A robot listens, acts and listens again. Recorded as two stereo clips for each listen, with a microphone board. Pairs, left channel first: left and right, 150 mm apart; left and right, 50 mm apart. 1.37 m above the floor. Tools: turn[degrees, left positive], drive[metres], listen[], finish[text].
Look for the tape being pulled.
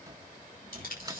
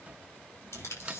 Action: turn[90]
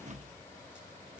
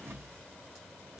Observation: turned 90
Action: listen[]
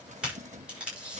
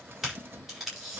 Action: finish[Found it: tape being pulled, straight ahead, over 4 m away.]